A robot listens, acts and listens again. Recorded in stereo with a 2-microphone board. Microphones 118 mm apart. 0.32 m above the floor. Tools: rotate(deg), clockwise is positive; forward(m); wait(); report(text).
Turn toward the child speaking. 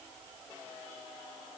wait()
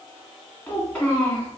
rotate(-30)
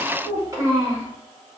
rotate(30)
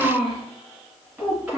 rotate(10)
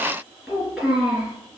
report("Facing the child speaking, 2 to 4 m away.")